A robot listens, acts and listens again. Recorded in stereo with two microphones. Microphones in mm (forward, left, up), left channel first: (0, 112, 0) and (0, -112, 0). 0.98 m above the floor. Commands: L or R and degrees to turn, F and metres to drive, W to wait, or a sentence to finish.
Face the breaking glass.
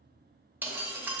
R30
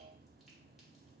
W
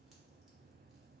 I heard breaking glass, but can't make it out now. It was about 20° left or 140° right.